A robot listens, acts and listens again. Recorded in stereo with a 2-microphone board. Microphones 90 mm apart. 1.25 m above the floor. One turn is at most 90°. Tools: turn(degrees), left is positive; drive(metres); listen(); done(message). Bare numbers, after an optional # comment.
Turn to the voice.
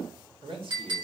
# The man speaking: about 75° right or 105° right.
turn(-75)
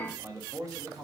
# So it is at 45° right.
turn(-45)
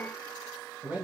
# The man speaking is now 20° right.
turn(-20)
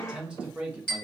# The man speaking is now 20° right.
turn(-20)
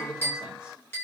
done("Facing the man speaking, 1 to 2 m away.")